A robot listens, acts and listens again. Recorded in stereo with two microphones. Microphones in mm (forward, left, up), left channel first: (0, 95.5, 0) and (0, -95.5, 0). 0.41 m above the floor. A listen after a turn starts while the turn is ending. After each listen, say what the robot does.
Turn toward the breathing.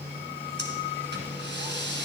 Turn 70° right.
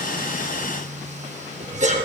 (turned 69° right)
Turn 40° right.
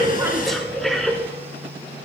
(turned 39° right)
Found it: breathing, straight ahead.